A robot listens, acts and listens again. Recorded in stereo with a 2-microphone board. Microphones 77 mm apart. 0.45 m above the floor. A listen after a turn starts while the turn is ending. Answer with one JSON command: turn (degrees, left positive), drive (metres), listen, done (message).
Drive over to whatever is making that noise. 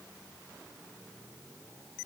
{"listen": true}
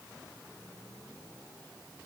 {"listen": true}
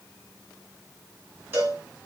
{"turn": -30}
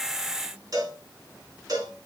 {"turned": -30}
{"turn": -120}
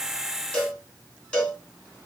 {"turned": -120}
{"turn": 15}
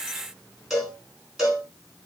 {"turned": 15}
{"drive": 1.0}
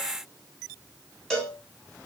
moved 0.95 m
{"drive": 1.0}
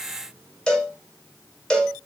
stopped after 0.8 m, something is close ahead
{"turn": 10}
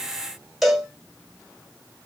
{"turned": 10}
{"done": "Arrived at the cowbell, straight ahead."}